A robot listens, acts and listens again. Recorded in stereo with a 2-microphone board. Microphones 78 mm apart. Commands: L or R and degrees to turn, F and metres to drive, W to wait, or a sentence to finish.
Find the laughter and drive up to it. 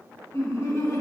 L40
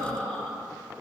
F1.0
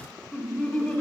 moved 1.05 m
L10
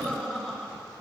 F1.0
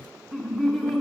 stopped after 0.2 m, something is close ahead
I am next to the laughter.